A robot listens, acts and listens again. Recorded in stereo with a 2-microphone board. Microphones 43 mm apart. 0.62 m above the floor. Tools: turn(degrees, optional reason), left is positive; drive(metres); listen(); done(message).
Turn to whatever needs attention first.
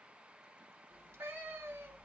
listen()
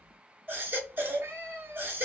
turn(degrees=-55, reason="The baby crying: about 55° right or 125° right.")
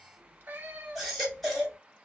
done("Found it: a baby crying, straight ahead.")